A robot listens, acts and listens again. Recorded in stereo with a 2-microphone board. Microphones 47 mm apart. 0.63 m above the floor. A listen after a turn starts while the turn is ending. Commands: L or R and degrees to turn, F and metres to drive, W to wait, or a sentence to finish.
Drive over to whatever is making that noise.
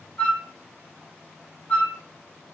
L35
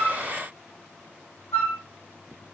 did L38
L105
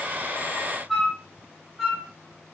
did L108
F1.0
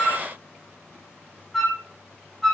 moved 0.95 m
F1.0
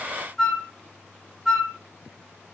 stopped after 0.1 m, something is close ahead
I am next to the flute.